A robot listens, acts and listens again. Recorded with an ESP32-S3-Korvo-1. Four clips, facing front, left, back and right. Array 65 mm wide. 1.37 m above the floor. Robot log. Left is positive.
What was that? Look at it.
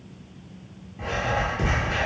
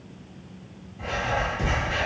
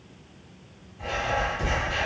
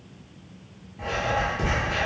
note: The writing: 30° right.
cmd yaw -30
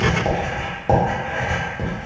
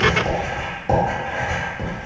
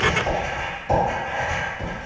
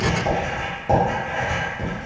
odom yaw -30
note: The writing is now 15° left.
cmd yaw +15
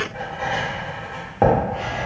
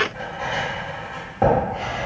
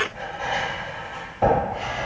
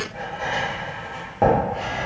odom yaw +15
end: Facing the writing, 1 to 2 m away.